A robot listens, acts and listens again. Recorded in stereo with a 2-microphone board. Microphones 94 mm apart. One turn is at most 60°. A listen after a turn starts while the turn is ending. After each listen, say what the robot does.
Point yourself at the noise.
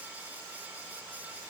Keep listening.
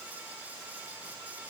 Keep listening.
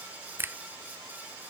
Turn 20° right.
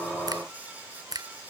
Turn 60° right.
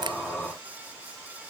Turn 60° right.
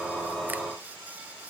Turn 15° right.
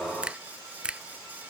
Turn 10° right.
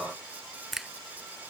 Found it: a finger snap, straight ahead.